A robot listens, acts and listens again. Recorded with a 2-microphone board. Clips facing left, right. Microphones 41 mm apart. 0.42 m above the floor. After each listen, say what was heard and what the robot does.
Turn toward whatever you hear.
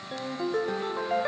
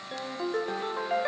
Turn 30° right.
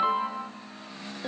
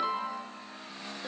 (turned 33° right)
So it is at 30° left. Turn 30° left.
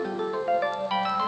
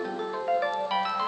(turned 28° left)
Found it: a ringtone, straight ahead, under 1 m away.